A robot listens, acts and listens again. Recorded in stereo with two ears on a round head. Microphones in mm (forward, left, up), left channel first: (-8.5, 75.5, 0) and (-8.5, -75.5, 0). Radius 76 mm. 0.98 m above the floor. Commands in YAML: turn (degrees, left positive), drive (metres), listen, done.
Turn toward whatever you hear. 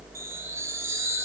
turn: -15
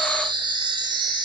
turn: -150
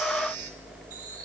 listen: true
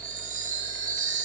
turn: -60
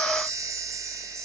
turn: -25
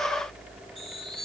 done: "Found it: a chime, straight ahead."